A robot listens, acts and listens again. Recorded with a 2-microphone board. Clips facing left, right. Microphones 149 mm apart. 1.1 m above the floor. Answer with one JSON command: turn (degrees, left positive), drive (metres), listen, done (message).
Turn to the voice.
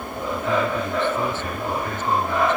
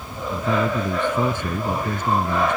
{"turn": -30}
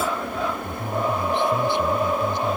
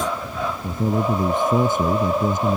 {"turn": -135}
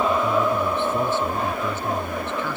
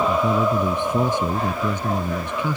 {"turn": -15}
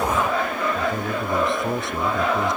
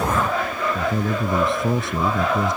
{"done": "Facing the man speaking."}